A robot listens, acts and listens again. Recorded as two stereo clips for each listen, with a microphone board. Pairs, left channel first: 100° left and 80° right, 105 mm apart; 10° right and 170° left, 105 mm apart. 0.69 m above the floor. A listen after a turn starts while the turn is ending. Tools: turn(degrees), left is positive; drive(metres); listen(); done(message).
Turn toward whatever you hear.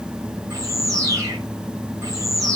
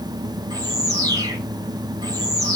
turn(degrees=-135)
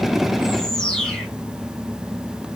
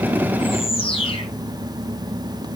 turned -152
turn(degrees=15)
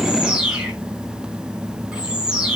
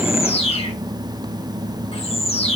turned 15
done("Facing the bird, 2 to 4 m away.")